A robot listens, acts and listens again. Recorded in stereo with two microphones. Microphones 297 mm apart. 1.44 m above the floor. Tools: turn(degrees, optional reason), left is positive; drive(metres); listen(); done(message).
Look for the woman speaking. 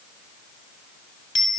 listen()
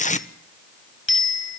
listen()
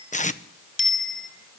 done("I can't make out a woman speaking to turn to.")